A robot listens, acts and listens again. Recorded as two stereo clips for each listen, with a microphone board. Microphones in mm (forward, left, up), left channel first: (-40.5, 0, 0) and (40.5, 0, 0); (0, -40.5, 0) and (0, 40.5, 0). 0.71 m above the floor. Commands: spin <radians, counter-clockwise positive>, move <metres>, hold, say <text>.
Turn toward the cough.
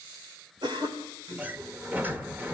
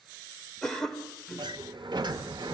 say Found it: a cough, straight ahead.